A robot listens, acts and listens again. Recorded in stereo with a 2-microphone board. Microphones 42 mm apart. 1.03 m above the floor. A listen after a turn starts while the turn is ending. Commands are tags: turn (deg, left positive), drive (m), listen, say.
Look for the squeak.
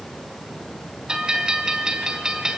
<listen/>
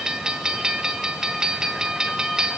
<listen/>
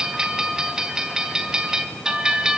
<say>I can't make out a squeak, only a bell.</say>